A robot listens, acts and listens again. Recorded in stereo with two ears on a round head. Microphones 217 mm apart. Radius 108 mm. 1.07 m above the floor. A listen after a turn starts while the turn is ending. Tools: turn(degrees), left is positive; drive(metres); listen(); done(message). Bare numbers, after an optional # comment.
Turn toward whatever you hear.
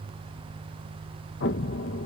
# The explosion: about 50° left or 130° left.
turn(50)
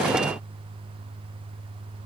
listen()
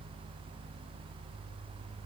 done("I heard an explosion, but can't make it out now. It was about straight ahead or 80° left.")